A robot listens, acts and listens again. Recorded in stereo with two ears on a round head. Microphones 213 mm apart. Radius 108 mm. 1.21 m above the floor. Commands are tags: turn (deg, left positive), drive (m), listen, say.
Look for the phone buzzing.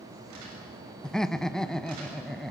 <listen/>
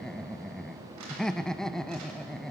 <listen/>
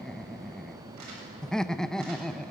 <say>I can't make out a phone buzzing to turn to.</say>